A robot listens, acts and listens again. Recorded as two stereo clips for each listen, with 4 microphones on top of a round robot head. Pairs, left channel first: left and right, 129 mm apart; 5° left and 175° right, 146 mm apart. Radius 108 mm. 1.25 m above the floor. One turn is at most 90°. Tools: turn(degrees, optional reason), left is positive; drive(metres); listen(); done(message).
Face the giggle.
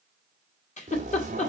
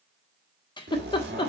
turn(degrees=65, reason="The giggle: 65° left.")
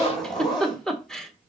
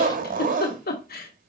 done("Found it: a giggle, straight ahead.")